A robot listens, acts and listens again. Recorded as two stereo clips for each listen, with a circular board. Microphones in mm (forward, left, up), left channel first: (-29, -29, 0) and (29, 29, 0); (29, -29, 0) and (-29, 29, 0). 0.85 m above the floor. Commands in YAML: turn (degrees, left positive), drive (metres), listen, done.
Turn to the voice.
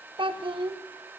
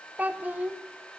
turn: 60
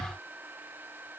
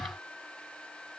listen: true
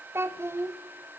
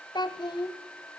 turn: -15
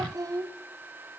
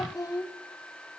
done: "Facing the child speaking, 1 to 2 m away."